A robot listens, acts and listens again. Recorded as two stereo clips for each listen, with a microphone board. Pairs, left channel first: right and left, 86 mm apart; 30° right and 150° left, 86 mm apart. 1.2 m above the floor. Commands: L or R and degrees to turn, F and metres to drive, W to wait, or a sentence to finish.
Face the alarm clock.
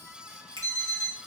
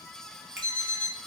L135
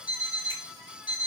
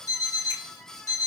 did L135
L15
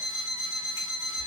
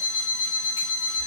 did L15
Facing the alarm clock.